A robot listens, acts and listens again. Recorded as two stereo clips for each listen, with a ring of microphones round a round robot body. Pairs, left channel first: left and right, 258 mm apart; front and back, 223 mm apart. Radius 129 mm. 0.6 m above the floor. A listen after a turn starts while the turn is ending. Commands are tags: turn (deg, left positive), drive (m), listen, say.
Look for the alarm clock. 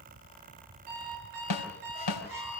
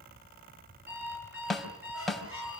<turn deg="-95"/>
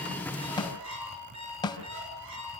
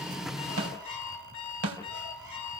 <turn deg="-20"/>
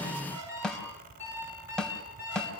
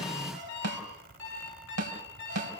<turn deg="-10"/>
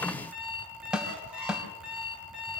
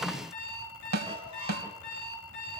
<say>Found it: an alarm clock, straight ahead, over 4 m away.</say>